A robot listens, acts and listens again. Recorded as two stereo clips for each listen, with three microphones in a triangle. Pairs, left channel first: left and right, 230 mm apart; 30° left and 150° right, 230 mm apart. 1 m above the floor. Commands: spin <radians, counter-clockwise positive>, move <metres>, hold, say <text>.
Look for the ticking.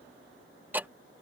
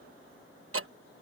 spin -3.05
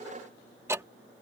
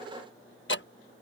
spin -0.17
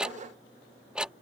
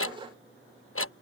say Found it: ticking, straight ahead.